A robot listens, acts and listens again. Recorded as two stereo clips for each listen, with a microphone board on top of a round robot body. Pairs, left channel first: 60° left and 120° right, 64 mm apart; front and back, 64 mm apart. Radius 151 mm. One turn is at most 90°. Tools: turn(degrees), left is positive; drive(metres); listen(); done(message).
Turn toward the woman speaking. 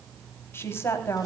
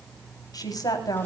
turn(degrees=15)
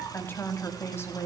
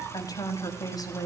turn(degrees=10)
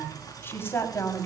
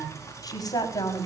turn(degrees=10)
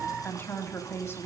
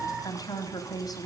turn(degrees=10)
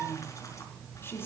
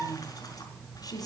turn(degrees=10)
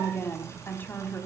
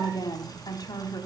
done("Found it: a woman speaking, straight ahead, over 4 m away.")